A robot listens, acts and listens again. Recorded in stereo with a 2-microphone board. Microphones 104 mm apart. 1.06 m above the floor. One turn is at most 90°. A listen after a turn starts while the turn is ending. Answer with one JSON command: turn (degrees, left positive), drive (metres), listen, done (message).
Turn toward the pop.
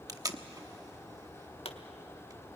{"turn": 65}
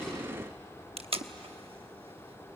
{"listen": true}
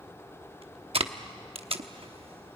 {"done": "I heard a pop, but can't make it out now. It was about straight ahead or 50° left."}